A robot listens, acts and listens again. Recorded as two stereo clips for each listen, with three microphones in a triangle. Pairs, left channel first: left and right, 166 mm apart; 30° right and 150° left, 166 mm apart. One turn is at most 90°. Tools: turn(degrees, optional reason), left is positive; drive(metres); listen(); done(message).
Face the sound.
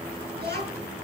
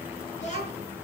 turn(degrees=-75, reason="The child speaking: 75° right.")
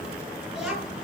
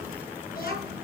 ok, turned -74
done("Facing the child speaking, over 4 m away.")